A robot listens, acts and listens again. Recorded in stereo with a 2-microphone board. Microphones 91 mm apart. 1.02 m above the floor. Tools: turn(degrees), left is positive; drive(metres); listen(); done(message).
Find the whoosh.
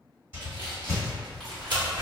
turn(degrees=-25)
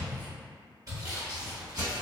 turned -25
turn(degrees=-125)
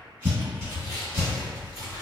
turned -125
turn(degrees=-35)
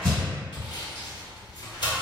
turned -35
done("Facing the whoosh, 1 to 2 m away.")